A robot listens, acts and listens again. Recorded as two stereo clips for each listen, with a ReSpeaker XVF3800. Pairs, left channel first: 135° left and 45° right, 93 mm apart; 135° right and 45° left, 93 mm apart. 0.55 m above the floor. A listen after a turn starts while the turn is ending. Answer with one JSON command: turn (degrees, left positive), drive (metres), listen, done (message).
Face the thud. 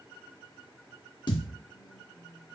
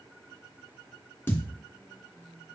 {"turn": 160}
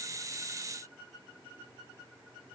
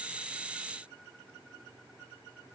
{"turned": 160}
{"done": "I heard a thud from this way, but can't make it out now."}